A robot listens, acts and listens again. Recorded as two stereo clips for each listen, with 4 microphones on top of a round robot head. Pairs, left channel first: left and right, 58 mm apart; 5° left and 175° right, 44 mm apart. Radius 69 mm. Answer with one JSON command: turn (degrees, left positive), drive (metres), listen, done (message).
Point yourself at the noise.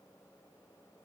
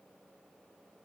{"listen": true}
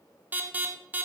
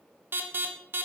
{"turn": -145}
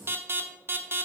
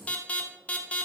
{"turn": -50}
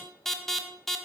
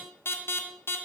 {"done": "Found it: an alarm, straight ahead, 1 to 2 m away."}